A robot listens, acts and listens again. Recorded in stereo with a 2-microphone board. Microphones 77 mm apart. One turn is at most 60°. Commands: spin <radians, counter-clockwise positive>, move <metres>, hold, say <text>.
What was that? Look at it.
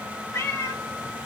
spin 0.61
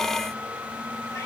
hold
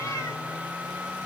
hold
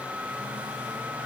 say I heard a cat meowing, but can't make it out now. It was about straight ahead or 110° left.